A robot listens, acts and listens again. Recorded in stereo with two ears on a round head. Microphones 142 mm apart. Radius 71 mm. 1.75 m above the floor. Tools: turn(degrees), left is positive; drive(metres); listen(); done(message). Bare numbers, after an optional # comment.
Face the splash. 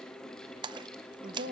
# The splash: about 30° right or 150° right.
turn(-30)
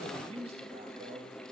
listen()
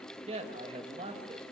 done("I heard a splash, but can't make it out now. It was about straight ahead or 120° right.")